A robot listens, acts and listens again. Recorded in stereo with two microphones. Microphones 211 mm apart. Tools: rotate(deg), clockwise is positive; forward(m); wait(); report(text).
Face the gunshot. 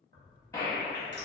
rotate(-15)
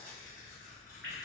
wait()
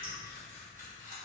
report("I heard a gunshot, but can't make it out now. It was about straight ahead or 150° left.")